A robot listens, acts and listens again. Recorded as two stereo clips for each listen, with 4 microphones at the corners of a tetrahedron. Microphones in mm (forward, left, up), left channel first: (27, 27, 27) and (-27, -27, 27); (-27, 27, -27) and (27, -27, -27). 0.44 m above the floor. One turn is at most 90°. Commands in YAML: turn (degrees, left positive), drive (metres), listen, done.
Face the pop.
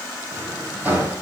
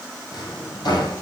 listen: true
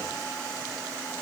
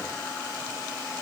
listen: true
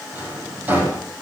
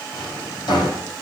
done: "I can't make out a pop, only a drawer."